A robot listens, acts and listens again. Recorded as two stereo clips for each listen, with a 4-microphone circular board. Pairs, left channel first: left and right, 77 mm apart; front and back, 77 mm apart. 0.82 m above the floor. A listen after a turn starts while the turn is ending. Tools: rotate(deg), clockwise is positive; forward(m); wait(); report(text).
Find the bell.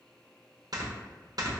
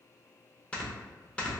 wait()
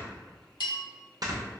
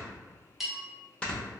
rotate(-95)
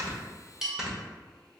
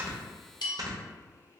report("Found it: a bell, straight ahead, under 1 m away.")